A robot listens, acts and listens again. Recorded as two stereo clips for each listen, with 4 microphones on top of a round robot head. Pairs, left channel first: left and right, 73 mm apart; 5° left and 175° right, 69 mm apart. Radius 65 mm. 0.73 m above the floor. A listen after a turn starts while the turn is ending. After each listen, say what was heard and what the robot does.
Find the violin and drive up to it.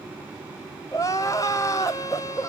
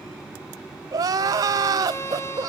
The violin: 50° left. Turn 50° left.
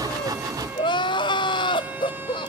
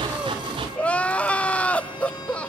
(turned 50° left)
Keep listening.
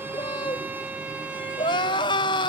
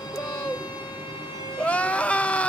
The violin is now 25° right. Turn 25° right.
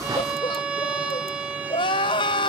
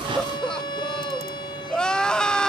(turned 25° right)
The violin is now 15° right. Turn 15° right.
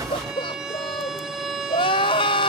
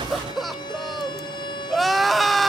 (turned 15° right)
Drive 1.0 m forward.
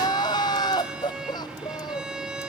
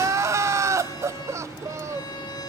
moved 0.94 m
The violin is now 10° right. Turn 10° right.
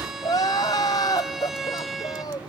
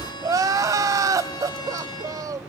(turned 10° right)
Drive 1.0 m forward.
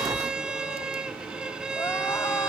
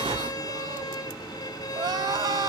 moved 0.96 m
The violin is now 10° right. Turn 10° right.
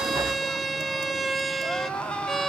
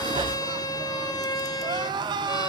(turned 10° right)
Drive 1.0 m forward.
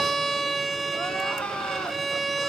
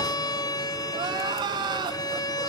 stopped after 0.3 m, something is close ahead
Arrived at the violin, straight ahead.